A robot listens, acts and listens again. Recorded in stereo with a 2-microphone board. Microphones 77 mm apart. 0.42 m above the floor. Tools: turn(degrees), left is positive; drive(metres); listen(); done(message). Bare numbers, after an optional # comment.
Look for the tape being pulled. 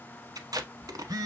# The tape being pulled: about 60° right or 120° right.
turn(-60)
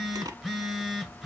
# So it is at 60° right.
turn(-60)
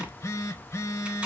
# The tape being pulled is now 15° right.
turn(-15)
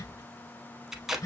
done("Found it: tape being pulled, straight ahead.")